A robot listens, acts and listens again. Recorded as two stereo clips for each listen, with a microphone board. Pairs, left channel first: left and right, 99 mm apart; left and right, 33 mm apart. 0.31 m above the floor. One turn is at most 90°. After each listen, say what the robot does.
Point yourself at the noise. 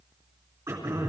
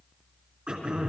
Turn 35° right.
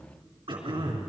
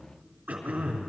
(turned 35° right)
Turn 90° right.
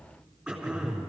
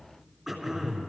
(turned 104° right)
Facing the throat clearing, 2 to 4 m away.